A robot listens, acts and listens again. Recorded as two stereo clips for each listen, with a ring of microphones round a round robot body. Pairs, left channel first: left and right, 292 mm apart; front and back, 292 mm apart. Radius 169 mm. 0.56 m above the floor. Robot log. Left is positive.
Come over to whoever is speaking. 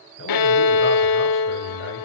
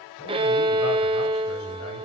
cmd idle
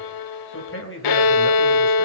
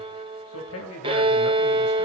note: The man speaking: 45° left.
cmd yaw +45
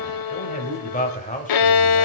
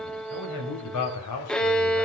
note: The man speaking is now 25° left.
cmd yaw +25
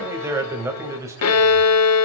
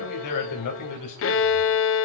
note: The man speaking is now 10° right.
cmd yaw -10
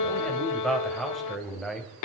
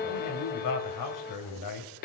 cmd fwd 1.0
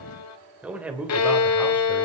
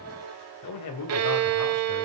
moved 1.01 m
cmd fwd 1.0
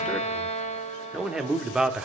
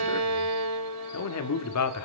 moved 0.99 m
cmd fwd 1.0
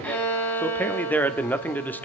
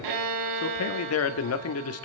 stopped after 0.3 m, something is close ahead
note: The man speaking is now 10° left.
cmd yaw +10
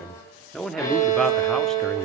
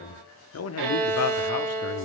end: Arrived at the man speaking, straight ahead.